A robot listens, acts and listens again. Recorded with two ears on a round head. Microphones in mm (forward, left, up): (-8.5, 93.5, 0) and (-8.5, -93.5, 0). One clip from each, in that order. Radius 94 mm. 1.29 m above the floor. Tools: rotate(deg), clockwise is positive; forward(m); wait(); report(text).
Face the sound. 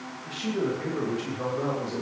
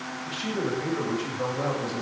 rotate(-30)
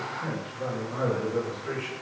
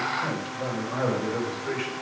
rotate(35)
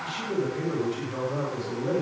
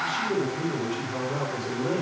report("Found it: a man speaking, straight ahead.")